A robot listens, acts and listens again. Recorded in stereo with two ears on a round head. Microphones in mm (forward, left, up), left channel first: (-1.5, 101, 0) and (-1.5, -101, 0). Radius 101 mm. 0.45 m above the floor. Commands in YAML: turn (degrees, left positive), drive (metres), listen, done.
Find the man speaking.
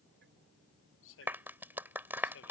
turn: 60
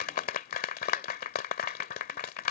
listen: true
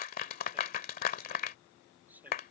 turn: -10
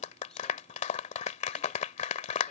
listen: true
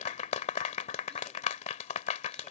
listen: true
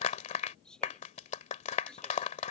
done: "Found it: a man speaking, straight ahead."